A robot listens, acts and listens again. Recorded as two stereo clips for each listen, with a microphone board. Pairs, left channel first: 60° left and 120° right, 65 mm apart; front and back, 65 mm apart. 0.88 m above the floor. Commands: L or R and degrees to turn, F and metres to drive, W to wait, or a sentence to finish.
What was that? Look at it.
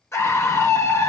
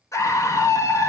L25
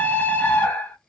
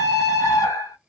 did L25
Found it: a scream, straight ahead.